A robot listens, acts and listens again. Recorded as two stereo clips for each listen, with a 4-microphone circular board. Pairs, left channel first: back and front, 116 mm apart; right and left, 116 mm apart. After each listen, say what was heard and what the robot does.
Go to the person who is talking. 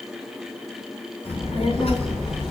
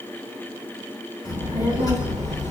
The child speaking: 150° right. Turn 150° right.
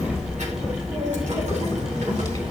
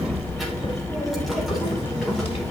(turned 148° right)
Drive 1.0 m forward.
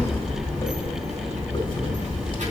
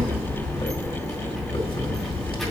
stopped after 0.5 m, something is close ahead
Something is in my way. I am facing the child speaking but have not reached it.